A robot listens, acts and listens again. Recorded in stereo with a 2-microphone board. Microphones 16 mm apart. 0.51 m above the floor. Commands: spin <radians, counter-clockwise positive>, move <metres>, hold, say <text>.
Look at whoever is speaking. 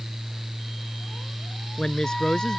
spin 0.79
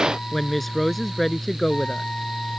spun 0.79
spin 0.17
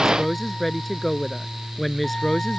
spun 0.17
say Found it: a woman speaking, straight ahead.